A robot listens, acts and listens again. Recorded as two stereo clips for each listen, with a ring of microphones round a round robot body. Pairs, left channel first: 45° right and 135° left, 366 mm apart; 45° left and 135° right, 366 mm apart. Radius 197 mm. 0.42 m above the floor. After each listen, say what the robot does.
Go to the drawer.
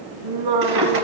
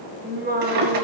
Turn 170° right.
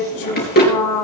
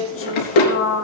Turn 20° left.
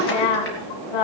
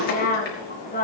Turn 10° left.
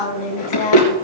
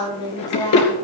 Drive 1.0 m forward.
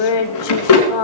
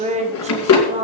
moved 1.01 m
Drive 1.0 m forward.
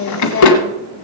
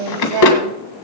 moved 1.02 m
Drive 1.0 m forward.
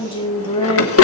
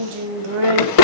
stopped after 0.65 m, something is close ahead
Turn 10° left.
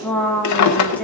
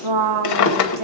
Arrived at the drawer, straight ahead.